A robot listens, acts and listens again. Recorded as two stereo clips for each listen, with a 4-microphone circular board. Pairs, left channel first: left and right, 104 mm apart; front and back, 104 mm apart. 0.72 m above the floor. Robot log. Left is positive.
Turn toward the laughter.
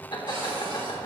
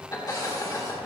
note: The laughter: 55° left.
cmd yaw +55
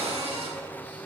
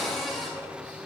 cmd idle
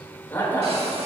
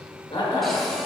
note: The laughter is now 25° left.
cmd yaw +25
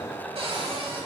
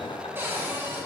cmd idle
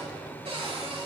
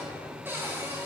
cmd idle
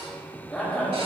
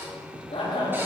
end: Found it: laughter, straight ahead, 2 to 4 m away.